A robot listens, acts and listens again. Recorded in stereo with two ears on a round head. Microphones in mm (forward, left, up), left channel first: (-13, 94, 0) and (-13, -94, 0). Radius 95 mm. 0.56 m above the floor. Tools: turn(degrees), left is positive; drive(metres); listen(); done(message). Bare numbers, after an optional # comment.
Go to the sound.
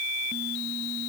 listen()
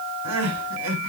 turn(-90)
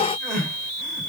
drive(1.0)
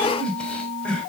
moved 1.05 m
drive(1.0)
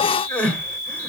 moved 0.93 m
drive(1.0)
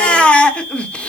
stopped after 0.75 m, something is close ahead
done("Arrived at the crying, straight ahead.")